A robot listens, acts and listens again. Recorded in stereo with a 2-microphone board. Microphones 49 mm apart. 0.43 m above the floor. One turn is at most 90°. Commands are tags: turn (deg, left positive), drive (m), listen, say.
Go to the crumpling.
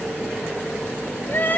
<listen/>
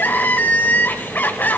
<listen/>
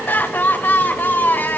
<say>I can't make out crumpling to turn to.</say>